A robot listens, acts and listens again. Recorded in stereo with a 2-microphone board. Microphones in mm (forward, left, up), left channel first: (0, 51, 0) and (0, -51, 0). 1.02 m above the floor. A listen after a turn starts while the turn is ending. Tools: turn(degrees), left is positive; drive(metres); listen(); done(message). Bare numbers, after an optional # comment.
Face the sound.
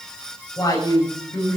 # The woman speaking: about 30° left or 150° left.
turn(30)
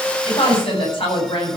# So it is at 120° left.
turn(120)
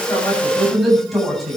done("Facing the woman speaking.")